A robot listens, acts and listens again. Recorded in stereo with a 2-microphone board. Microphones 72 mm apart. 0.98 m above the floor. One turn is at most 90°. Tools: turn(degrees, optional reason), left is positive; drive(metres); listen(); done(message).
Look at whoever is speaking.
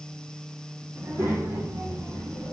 turn(degrees=-45, reason="The child speaking: about 45° right or 135° right.")
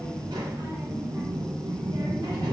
turn(degrees=-90, reason="So it is at 90° right.")
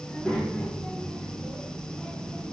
turn(degrees=15, reason="The child speaking is now 15° left.")
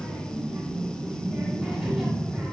done("Found it: a child speaking, straight ahead, 1 to 2 m away.")